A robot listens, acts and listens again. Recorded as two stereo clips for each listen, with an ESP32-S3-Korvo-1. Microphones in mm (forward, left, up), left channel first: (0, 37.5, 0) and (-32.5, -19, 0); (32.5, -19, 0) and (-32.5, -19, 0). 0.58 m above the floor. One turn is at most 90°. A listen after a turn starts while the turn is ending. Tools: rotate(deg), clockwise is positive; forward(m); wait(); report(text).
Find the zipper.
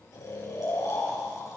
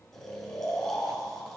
wait()
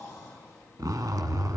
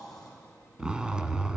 rotate(90)
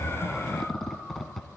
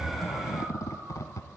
rotate(25)
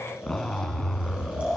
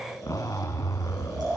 rotate(20)
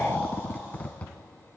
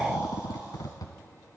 report("Facing the zipper.")